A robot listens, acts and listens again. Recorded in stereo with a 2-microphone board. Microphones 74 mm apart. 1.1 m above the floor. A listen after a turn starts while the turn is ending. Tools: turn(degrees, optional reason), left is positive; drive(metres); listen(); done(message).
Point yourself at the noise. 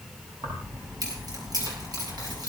turn(degrees=-60, reason="The keys jangling: about 60° right or 120° right.")
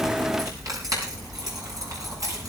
turn(degrees=-50, reason="So it is at 50° right.")
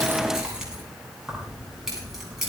done("Facing the keys jangling, over 4 m away.")